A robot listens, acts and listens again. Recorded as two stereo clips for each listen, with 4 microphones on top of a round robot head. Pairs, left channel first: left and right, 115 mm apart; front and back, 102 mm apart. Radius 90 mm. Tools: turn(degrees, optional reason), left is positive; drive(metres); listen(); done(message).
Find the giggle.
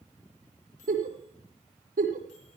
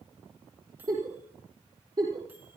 turn(degrees=-115, reason="The giggle: 115° right.")
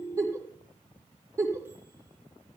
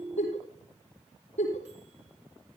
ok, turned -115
turn(degrees=-25, reason="The giggle is now 25° right.")
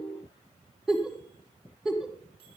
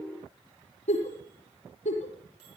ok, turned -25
done("Facing the giggle.")